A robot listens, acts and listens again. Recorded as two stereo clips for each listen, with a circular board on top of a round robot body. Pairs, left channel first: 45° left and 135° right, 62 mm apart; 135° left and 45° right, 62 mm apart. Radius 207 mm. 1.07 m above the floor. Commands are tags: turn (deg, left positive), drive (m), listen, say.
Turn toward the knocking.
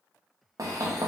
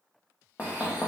<turn deg="-165"/>
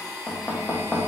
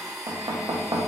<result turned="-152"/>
<turn deg="-15"/>
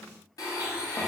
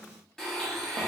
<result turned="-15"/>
<listen/>
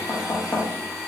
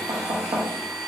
<say>Found it: knocking, straight ahead.</say>